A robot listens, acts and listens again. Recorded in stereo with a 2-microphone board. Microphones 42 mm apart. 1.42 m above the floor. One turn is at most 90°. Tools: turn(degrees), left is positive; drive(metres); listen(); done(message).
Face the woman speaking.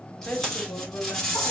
turn(degrees=50)
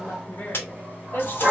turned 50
turn(degrees=60)
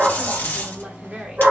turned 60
turn(degrees=-25)
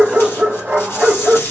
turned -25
listen()
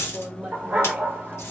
turn(degrees=-20)
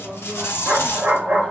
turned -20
listen()
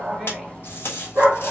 listen()
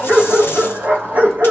done("Facing where the woman speaking came from. I can't hear it now.")